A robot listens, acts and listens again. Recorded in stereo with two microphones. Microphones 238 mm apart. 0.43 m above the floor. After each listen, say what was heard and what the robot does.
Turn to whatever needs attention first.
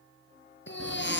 The baby crying: about 55° left or 125° left. Turn 55° left.
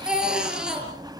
Found it: a baby crying, straight ahead, over 4 m away.